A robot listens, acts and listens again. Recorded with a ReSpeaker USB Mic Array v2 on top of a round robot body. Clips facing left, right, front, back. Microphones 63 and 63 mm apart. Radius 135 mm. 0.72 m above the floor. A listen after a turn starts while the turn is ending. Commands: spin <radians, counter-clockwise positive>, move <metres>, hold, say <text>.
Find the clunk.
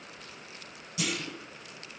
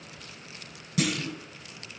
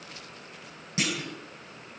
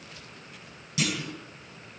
spin -1.05
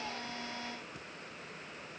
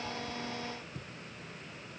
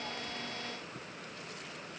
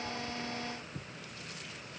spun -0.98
say I heard a clunk from this way, but can't make it out now.